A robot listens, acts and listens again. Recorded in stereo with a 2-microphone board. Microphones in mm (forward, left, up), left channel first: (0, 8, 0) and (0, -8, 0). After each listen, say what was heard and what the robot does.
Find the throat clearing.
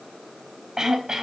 The throat clearing: about 40° right or 140° right. Turn 40° right.
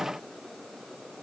Keep listening.
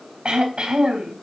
So it is at 95° right. Turn 95° right.
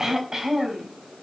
The throat clearing is now 25° right. Turn 25° right.
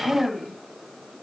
Found it: throat clearing, straight ahead, 2 to 4 m away.